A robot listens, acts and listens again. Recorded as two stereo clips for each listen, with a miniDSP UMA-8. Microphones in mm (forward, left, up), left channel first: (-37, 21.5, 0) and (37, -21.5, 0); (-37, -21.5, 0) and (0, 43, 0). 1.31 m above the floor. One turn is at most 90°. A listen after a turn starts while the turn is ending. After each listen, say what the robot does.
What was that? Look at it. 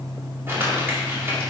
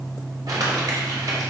Turn 35° left.
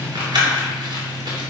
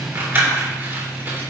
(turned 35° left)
Facing the crumpling.